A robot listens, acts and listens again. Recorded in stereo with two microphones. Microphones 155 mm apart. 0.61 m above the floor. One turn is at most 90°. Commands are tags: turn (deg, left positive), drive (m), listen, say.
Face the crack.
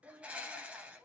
<listen/>
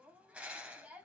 <listen/>
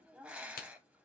<turn deg="90"/>
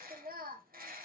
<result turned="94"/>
<say>I heard a crack from this way, but can't make it out now.</say>